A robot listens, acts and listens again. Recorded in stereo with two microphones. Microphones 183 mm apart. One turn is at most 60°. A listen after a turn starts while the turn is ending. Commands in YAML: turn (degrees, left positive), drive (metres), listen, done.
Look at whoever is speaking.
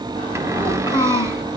turn: 25
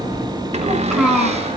done: "Found it: a child speaking, straight ahead."